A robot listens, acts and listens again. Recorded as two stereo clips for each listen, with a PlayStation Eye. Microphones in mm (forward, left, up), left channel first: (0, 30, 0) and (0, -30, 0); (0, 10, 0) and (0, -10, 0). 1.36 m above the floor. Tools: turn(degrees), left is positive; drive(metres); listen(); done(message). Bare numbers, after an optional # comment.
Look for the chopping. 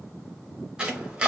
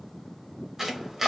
turn(-30)
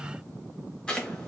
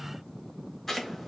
# So it is at 15° left.
turn(15)
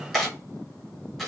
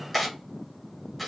done("Facing the chopping, under 1 m away.")